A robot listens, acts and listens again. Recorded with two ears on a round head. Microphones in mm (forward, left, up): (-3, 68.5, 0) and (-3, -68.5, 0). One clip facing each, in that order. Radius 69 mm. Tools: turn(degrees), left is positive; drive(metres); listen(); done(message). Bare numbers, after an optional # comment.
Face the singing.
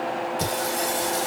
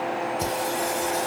# The singing: about 40° left or 140° left.
turn(40)
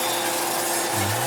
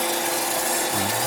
# So it is at 20° right.
turn(-20)
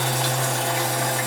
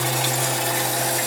# The singing is now 30° right.
turn(-30)
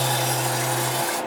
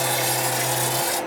# The singing is now 25° right.
turn(-25)
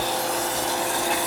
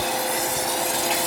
# The singing is now 20° right.
turn(-20)
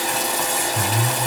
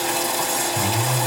done("Found it: singing, straight ahead, 1 to 2 m away.")